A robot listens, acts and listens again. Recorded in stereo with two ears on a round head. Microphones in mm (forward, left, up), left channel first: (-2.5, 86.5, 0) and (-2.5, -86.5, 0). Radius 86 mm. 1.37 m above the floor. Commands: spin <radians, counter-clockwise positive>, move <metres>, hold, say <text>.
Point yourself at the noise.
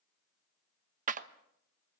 spin -0.70
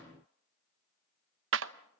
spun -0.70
spin -1.66
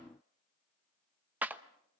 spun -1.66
spin -0.17
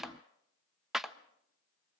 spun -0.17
say Found it: a clap, straight ahead, 1 to 2 m away.